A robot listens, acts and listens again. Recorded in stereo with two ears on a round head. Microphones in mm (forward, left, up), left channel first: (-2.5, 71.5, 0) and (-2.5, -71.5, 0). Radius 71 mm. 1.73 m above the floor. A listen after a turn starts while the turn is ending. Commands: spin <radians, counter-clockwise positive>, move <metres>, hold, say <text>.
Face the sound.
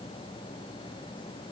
hold
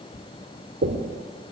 spin -1.13
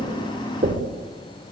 spin -0.79
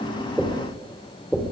say Found it: knocking, straight ahead.